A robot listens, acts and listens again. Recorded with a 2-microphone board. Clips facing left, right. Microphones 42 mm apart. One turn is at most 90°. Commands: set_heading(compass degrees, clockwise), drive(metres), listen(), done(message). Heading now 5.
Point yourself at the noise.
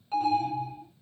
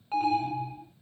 set_heading(35)
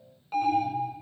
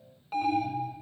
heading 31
done("Facing the alarm.")